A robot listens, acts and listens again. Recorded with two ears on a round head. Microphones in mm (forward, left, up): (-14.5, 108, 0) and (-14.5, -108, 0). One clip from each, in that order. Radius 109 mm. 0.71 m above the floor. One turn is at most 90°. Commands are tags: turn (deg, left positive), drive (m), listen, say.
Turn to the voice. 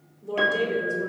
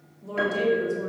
<turn deg="-20"/>
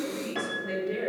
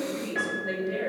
<turn deg="-90"/>
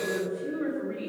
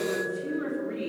<turn deg="-40"/>
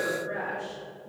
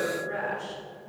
<say>Found it: a woman speaking, straight ahead.</say>